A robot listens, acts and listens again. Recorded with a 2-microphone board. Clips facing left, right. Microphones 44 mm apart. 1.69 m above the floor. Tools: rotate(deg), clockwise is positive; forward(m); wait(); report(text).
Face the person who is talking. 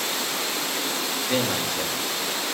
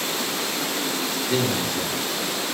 rotate(-60)
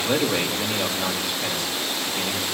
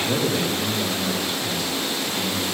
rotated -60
rotate(-60)
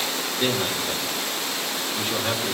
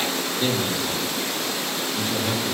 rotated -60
rotate(-20)
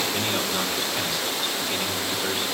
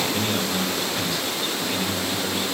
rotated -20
report("Facing the man speaking.")